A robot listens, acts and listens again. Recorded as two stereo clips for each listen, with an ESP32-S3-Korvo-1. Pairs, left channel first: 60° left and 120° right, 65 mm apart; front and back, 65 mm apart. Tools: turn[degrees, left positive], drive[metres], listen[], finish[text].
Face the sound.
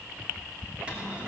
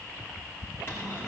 Thought: The cupboard door: 50° right.
Action: turn[-50]
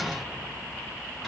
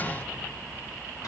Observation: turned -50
Action: listen[]
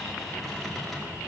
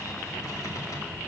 Thought: The cupboard door is now 30° right.
Action: turn[-30]
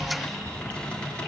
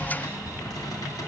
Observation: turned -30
Thought: The cupboard door is now 15° right.
Action: turn[-15]
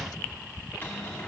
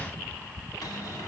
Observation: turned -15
Action: finish[Found it: a cupboard door, straight ahead, 2 to 4 m away.]